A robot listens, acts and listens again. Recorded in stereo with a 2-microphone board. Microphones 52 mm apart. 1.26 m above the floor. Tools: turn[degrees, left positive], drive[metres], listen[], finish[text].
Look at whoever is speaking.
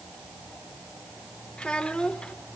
Thought: The child speaking: about 20° left or 160° left.
Action: turn[20]
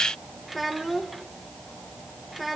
Action: finish[Found it: a child speaking, straight ahead, 1 to 2 m away.]